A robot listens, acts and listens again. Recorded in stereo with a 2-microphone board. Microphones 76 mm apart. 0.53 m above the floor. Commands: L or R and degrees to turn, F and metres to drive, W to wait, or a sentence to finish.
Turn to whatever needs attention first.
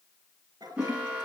R30
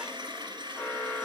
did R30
L15
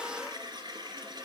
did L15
W
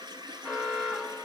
Found it: an alarm, straight ahead.